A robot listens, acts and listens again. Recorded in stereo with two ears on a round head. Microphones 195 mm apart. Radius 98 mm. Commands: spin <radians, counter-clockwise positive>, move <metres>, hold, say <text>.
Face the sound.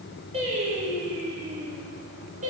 spin -0.61
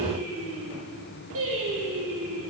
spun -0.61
spin -1.83
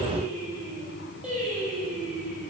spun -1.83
say Facing the singing.